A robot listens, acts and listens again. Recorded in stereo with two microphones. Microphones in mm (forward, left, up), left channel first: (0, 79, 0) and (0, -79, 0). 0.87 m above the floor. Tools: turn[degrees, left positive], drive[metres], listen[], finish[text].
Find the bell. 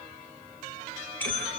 Action: turn[30]
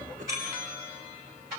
Thought: So it is at 20° right.
Action: turn[-20]
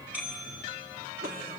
Thought: The bell is now 10° right.
Action: turn[-10]
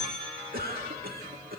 Action: finish[Found it: a bell, straight ahead.]